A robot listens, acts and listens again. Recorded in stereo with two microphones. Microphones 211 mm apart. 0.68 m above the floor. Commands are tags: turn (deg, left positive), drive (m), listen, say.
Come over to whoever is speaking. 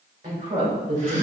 <turn deg="-45"/>
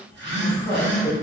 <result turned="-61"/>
<turn deg="15"/>
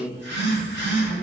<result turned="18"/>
<drive m="1.0"/>
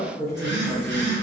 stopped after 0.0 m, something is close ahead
<say>Something is in my way. I am facing the woman speaking but have not reached it.</say>